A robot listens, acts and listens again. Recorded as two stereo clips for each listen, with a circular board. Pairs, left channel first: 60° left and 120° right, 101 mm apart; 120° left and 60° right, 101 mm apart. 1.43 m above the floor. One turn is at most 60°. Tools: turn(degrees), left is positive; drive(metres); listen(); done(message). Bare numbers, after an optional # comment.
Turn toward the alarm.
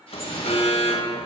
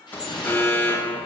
# The alarm: 50° left.
turn(50)
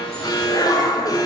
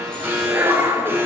# The alarm is now 10° left.
turn(10)
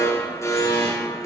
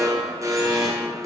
done("Facing the alarm.")